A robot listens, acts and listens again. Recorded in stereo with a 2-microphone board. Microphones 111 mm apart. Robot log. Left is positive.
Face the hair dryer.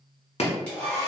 cmd yaw +30
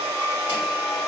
note: So it is at 140° left.
cmd yaw +140
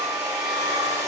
note: The hair dryer is now 10° right.
cmd yaw -10
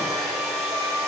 end: Facing the hair dryer.